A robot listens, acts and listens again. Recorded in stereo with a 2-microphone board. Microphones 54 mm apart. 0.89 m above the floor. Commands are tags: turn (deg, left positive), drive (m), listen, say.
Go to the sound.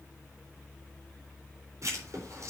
<turn deg="-65"/>
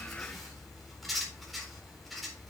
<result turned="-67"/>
<drive m="1.0"/>
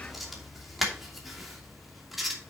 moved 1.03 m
<drive m="1.0"/>
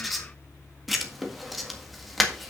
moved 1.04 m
<drive m="1.0"/>
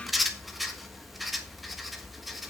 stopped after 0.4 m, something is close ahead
<say>Arrived at the writing, straight ahead.</say>